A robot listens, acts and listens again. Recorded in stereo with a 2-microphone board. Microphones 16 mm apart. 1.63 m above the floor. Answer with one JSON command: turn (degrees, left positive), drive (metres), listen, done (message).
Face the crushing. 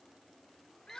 {"listen": true}
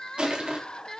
{"turn": -70}
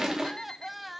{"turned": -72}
{"turn": -40}
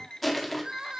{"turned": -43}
{"done": "Facing the crushing."}